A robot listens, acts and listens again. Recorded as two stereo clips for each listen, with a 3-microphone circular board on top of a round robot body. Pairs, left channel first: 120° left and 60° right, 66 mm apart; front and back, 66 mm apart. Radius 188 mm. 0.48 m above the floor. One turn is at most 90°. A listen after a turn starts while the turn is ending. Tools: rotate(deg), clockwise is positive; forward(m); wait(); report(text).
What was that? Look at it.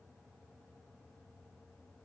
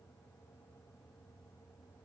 wait()
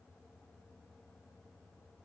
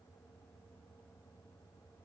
wait()
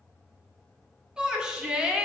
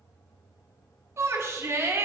rotate(90)
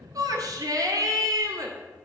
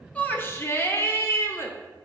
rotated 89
rotate(50)
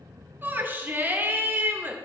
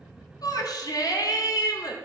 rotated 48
report("Found it: a shout, straight ahead.")